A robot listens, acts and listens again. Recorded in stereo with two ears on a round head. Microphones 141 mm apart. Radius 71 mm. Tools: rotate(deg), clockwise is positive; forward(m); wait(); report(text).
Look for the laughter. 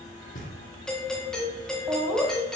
rotate(30)
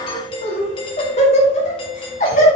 rotate(-50)
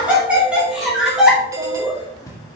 report("Found it: laughter, straight ahead.")